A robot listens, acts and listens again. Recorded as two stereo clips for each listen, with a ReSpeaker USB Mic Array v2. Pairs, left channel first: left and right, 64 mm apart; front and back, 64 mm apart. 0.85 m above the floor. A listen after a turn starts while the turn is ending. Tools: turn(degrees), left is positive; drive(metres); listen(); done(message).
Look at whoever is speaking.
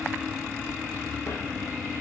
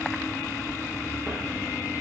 listen()
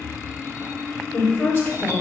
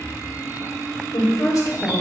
turn(degrees=35)
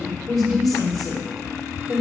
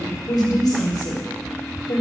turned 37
done("Facing the woman speaking, 1 to 2 m away.")